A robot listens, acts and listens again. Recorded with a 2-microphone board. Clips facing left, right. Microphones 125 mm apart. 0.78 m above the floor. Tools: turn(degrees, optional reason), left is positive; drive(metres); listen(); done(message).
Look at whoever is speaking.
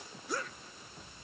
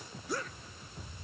listen()
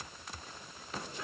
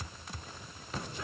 listen()
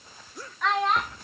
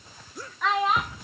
turn(degrees=-30)
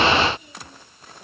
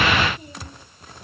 listen()
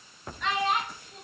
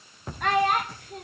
turn(degrees=-120, reason="So it is at 120° right.")
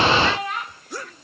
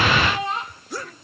turn(degrees=-25, reason="The child speaking is now 25° right.")
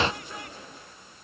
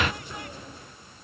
listen()
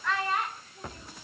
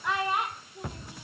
turn(degrees=-15, reason="The child speaking is now 15° right.")
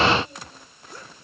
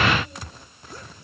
listen()
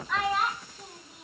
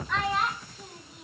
done("Facing the child speaking, 2 to 4 m away.")